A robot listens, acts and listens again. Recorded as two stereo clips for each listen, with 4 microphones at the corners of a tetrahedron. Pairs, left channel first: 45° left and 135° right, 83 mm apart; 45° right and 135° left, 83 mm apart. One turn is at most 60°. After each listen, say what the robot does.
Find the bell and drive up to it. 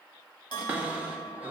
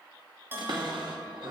Turn 60° left.
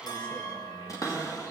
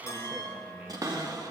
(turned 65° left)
Keep listening.
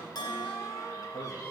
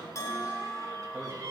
Drive 1.0 m forward.
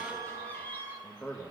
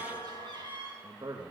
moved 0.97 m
Turn 10° left.
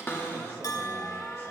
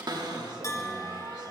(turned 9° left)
Drive 1.0 m forward.
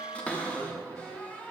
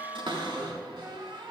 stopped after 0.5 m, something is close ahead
Turn 10° left.
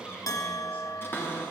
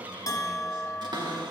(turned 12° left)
Arrived at the bell, straight ahead.